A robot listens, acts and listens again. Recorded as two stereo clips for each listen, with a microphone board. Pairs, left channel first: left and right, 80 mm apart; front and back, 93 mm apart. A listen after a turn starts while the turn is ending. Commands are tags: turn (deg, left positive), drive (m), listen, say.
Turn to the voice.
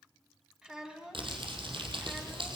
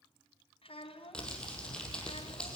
<turn deg="-10"/>
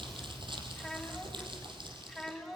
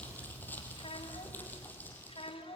<say>Found it: a child speaking, straight ahead, 2 to 4 m away.</say>